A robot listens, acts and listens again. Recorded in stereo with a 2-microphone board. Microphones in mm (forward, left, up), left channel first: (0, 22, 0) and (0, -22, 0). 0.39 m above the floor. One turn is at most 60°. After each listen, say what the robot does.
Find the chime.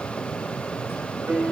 Keep listening.
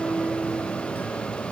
Keep listening.
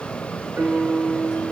I can't make out a chime to turn to.